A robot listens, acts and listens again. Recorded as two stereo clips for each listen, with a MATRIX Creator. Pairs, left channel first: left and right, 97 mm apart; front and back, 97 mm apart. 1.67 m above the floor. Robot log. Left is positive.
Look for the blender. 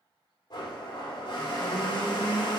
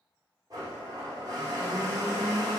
note: The blender: 130° left.
cmd yaw +130
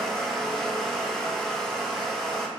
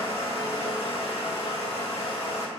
end: Found it: a blender, straight ahead.